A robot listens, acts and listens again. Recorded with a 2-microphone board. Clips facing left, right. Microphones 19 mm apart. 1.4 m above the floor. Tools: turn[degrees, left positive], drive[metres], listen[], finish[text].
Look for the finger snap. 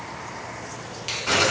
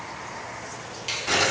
Action: turn[30]
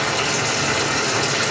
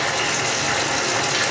Action: listen[]
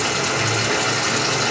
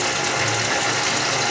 Action: listen[]
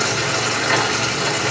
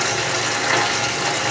Action: finish[I heard a finger snap, but can't make it out now. It was about 15° right or 135° left.]